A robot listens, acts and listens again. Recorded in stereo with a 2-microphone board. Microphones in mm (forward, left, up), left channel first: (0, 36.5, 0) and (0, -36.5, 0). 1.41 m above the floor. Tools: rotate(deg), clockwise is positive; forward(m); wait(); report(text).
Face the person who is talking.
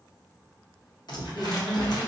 rotate(-30)
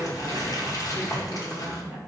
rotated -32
rotate(20)
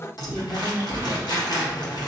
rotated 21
report("Found it: a woman speaking, straight ahead.")